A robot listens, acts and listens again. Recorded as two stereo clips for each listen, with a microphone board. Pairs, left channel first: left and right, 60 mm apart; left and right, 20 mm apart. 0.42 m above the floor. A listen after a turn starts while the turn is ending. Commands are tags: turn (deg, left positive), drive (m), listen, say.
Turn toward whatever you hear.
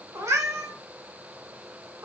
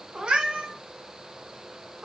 <turn deg="-55"/>
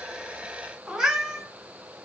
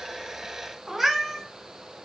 <turn deg="-15"/>
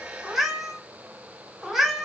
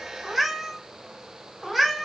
<say>Facing the cat meowing.</say>